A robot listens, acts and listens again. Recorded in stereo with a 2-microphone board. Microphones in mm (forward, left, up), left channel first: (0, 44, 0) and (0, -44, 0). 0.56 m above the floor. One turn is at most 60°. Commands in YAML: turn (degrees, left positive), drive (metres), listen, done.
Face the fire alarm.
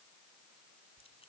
listen: true
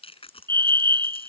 turn: -55
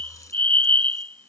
turn: -60
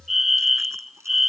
done: "Found it: a fire alarm, straight ahead."